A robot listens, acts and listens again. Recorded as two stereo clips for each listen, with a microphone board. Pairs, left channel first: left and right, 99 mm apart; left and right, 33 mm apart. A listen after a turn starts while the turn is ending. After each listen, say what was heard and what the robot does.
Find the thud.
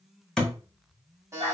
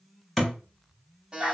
Turn 30° left.
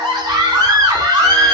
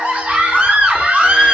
Keep listening.
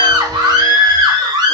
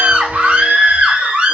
I heard a thud, but can't make it out now. It was about 25° right or 145° left.